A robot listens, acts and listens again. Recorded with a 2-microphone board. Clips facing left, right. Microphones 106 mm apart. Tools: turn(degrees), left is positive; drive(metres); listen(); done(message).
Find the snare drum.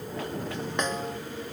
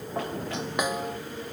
turn(degrees=-30)
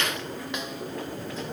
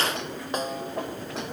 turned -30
turn(degrees=-140)
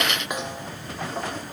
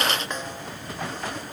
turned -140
turn(degrees=10)
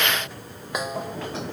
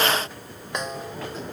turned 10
done("Found it: a snare drum, straight ahead.")